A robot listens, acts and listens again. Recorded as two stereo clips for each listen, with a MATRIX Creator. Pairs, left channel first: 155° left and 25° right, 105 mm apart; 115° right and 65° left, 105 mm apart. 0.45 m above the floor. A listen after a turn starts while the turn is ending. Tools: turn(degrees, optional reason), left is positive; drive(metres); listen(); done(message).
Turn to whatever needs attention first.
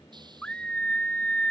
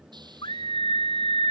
turn(degrees=-125, reason="The scream: 125° right.")
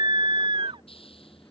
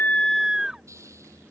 turn(degrees=-15, reason="The scream is now 15° right.")
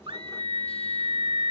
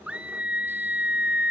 turn(degrees=-10, reason="The scream is now 10° right.")
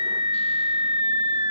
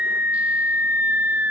done("Found it: a scream, straight ahead.")